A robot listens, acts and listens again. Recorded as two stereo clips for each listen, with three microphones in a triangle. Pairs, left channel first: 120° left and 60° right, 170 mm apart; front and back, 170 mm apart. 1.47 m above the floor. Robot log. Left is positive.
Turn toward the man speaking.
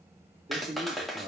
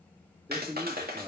note: The man speaking: 115° right.
cmd yaw -115
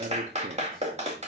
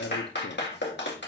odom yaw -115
note: The man speaking is now 20° right.
cmd yaw -20
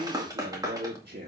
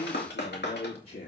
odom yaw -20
note: The man speaking is now 35° right.
cmd yaw -35
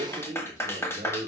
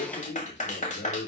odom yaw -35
end: Facing the man speaking.